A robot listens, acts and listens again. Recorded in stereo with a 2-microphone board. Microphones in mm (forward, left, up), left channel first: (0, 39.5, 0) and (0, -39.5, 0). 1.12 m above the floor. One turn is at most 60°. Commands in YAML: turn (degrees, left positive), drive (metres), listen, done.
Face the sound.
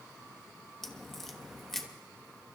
turn: 30
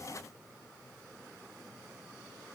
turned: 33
listen: true
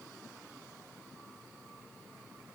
done: "I heard a crack, but can't make it out now. It was about 30° right or 145° left."